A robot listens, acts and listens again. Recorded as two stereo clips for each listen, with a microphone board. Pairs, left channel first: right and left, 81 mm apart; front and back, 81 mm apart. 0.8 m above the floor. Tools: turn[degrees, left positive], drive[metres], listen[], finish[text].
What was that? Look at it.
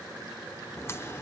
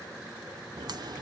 Thought: The crack: 150° right.
Action: turn[-150]
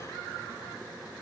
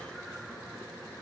Action: finish[I heard a crack from this way, but can't make it out now.]